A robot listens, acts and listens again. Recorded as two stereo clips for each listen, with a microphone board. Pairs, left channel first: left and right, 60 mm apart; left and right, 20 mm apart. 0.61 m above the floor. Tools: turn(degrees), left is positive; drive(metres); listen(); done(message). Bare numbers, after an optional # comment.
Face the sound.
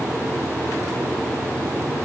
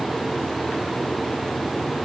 listen()
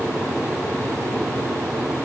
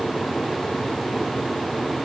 listen()
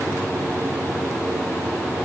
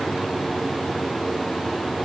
done("I can't make out anything to turn to.")